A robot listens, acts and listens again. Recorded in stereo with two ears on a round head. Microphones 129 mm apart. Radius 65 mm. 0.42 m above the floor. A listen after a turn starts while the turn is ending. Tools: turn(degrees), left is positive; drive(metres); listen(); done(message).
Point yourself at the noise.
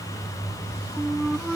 turn(degrees=30)
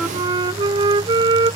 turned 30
turn(degrees=-30)
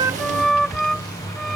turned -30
done("Found it: a flute, straight ahead.")